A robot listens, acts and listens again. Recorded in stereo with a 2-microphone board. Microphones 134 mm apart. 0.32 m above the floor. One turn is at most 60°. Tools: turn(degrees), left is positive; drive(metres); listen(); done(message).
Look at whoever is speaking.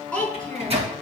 turn(degrees=30)
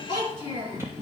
turn(degrees=60)
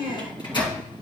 turn(degrees=60)
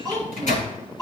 turn(degrees=25)
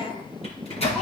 done("Found it: a child speaking, straight ahead, over 4 m away.")